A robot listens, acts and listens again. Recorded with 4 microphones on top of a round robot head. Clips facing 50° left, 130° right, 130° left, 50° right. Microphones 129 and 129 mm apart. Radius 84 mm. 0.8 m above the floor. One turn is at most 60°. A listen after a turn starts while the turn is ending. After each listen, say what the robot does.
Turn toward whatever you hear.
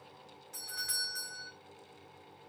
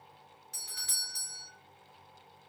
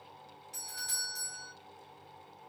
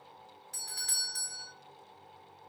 Turn 60° right.
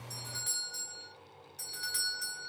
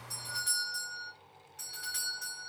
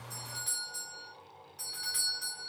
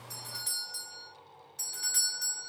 Facing the doorbell.